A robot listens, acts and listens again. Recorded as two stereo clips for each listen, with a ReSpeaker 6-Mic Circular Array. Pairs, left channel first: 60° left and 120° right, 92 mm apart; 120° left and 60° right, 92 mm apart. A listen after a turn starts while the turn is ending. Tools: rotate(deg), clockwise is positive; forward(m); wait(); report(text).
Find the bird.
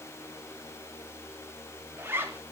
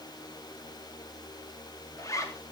wait()
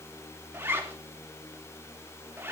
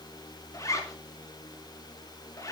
wait()
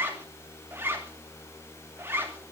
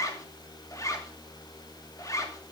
report("I can't make out a bird to turn to.")